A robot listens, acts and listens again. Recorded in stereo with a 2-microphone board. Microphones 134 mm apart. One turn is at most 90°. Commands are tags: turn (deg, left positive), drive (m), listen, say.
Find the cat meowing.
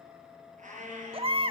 <turn deg="-70"/>
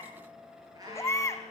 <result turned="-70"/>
<turn deg="-30"/>
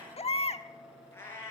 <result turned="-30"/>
<turn deg="20"/>
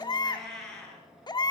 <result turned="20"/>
<say>Found it: a cat meowing, straight ahead.</say>